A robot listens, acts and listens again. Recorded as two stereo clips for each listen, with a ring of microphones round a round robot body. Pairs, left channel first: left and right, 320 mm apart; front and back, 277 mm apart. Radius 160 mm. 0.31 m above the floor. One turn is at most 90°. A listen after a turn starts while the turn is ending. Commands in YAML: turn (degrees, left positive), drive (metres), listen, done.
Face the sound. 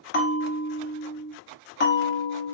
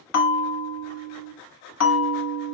turn: 30
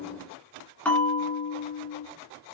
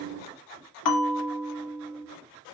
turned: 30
done: "Facing the bell."